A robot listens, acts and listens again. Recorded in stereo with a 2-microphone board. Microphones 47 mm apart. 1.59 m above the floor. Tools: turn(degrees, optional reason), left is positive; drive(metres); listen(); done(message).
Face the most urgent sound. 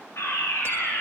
turn(degrees=65, reason="The fire alarm: about 65° left or 115° left.")
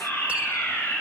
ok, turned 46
turn(degrees=65, reason="So it is at 65° left.")
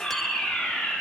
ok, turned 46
turn(degrees=20, reason="The fire alarm is now 20° left.")
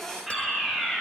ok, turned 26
done("Found it: a fire alarm, straight ahead, over 4 m away.")